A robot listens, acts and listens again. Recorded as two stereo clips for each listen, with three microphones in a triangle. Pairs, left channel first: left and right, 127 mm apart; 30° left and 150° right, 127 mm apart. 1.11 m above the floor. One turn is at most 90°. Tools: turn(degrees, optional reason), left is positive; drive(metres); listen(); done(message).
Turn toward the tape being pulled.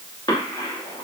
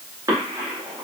listen()
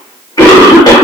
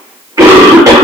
listen()
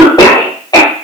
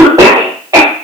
done("I can't make out tape being pulled to turn to.")